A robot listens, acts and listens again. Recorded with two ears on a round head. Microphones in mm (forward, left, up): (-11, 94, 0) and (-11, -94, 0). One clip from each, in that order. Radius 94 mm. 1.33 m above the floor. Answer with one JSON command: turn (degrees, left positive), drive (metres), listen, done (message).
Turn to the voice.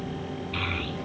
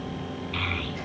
{"turn": -30}
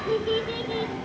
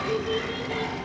{"turn": 20}
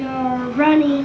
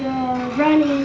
{"done": "Found it: a child speaking, straight ahead."}